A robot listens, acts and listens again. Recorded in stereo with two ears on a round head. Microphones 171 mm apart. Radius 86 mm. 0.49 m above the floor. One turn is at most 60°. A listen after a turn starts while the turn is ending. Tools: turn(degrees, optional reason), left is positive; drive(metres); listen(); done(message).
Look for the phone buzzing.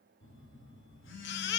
turn(degrees=60, reason="The phone buzzing: about 70° left or 110° left.")
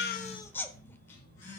turn(degrees=45, reason="So it is at 45° left.")
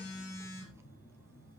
turn(degrees=15, reason="The phone buzzing is now 15° left.")
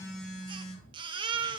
done("Found it: a phone buzzing, straight ahead, over 4 m away.")